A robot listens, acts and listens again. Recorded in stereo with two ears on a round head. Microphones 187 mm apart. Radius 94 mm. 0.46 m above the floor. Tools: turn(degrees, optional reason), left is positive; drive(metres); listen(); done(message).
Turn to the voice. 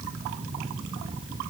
listen()
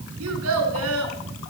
turn(degrees=-90)
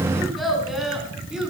done("Found it: a child speaking, straight ahead, 2 to 4 m away.")